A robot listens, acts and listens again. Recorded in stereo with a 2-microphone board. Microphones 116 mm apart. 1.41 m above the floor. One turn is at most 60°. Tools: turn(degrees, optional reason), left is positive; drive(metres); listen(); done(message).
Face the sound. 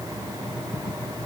listen()
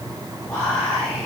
turn(degrees=30)
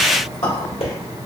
turn(degrees=60, reason="So it is at 135° left.")
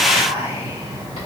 turn(degrees=60, reason="The whispering is now 80° left.")
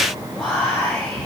turn(degrees=15, reason="The whispering is now 15° left.")
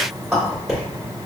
done("Facing the whispering.")